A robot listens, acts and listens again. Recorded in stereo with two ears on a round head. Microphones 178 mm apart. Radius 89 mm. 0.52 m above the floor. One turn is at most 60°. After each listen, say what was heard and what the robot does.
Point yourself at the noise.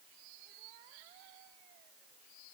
Keep listening.
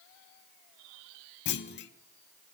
The clunk: about 60° left or 120° left. Turn 60° left.
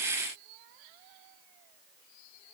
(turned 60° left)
Keep listening.
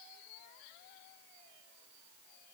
I heard a clunk, but can't make it out now. It was about straight ahead or 60° left.